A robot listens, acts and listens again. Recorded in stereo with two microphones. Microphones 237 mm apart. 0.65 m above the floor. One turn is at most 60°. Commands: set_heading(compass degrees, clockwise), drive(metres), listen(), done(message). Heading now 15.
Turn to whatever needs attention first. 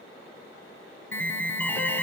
set_heading(345)
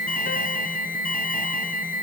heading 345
set_heading(285)
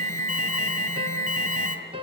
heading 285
set_heading(225)
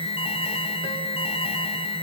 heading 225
set_heading(200)
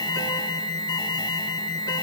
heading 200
set_heading(180)
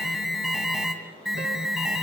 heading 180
done("Facing the alarm, 2 to 4 m away.")